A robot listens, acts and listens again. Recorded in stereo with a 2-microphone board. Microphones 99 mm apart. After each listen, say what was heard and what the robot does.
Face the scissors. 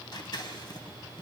The scissors: about 45° left or 135° left. Turn 45° left.
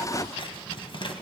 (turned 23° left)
So it is at 105° left. Turn 105° left.
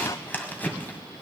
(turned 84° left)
The scissors is now 20° left. Turn 20° left.
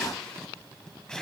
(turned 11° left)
The scissors is now 10° left. Turn 10° left.
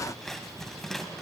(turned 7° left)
Found it: scissors, straight ahead, 1 to 2 m away.